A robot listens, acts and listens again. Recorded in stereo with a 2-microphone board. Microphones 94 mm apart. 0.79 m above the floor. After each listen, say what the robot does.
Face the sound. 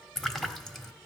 Turn 30° left.
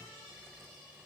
Keep listening.
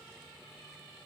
I heard a splash, but can't make it out now. It was about 25° right or 145° left.